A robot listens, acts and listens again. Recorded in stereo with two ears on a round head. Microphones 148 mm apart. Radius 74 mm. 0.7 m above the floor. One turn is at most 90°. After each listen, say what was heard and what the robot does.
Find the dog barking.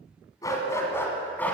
Turn 30° left.
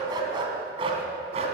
So it is at 40° right. Turn 40° right.
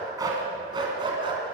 The dog barking is now 30° right. Turn 30° right.
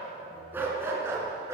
The dog barking is now 20° right. Turn 20° right.
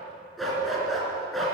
Facing the dog barking.